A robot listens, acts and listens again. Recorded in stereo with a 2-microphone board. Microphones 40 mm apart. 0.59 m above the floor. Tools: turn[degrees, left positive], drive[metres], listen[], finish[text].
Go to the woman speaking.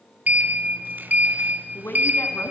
Thought: The woman speaking: about 65° left or 115° left.
Action: turn[65]
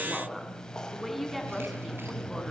Action: drive[1.0]
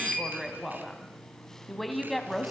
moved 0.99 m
Action: drive[1.0]
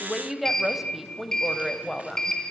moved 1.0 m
Action: drive[1.0]
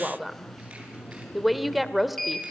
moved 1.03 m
Action: drive[1.0]
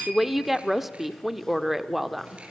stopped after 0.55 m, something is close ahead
Thought: The woman speaking is now 10° right.
Action: turn[-10]
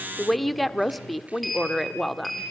Action: finish[I am next to the woman speaking.]